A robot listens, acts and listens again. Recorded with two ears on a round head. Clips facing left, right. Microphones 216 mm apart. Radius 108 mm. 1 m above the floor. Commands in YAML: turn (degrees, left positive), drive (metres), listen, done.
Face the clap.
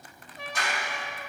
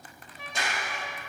turn: -25
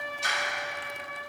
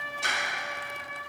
turn: -125
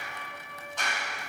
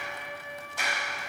turn: -10
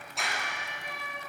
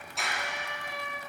done: "Found it: a clap, straight ahead."